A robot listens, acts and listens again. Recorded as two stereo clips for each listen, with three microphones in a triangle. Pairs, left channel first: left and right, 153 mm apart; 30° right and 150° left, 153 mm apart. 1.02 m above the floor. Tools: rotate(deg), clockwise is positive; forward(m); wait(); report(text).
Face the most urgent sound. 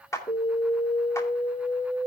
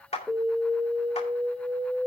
rotate(-55)
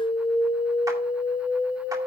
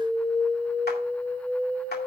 rotate(-15)
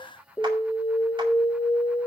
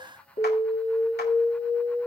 report("Found it: an alarm, straight ahead, 2 to 4 m away.")